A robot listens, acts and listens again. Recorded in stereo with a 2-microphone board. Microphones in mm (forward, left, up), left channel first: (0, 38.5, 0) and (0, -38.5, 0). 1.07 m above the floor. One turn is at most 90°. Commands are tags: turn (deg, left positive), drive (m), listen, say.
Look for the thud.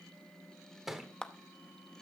<turn deg="-30"/>
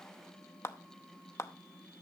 <listen/>
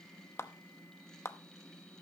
<say>I heard a thud, but can't make it out now. It was about 25° left or 145° right.</say>